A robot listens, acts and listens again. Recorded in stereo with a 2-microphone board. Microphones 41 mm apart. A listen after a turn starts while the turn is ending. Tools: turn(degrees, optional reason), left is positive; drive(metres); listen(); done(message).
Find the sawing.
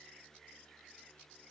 listen()
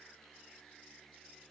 listen()
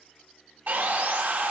turn(degrees=-45, reason="The sawing: about 45° right or 135° right.")
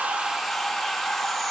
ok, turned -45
done("Facing the sawing, under 1 m away.")